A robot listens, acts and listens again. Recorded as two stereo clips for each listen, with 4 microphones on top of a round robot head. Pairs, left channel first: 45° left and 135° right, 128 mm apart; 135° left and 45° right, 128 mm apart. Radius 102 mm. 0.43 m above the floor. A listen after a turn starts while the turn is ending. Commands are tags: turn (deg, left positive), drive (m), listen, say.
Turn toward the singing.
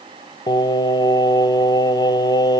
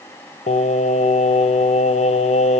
<turn deg="100"/>
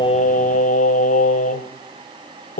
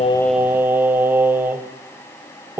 <turn deg="30"/>
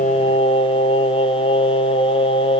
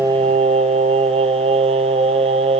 <say>Found it: singing, straight ahead.</say>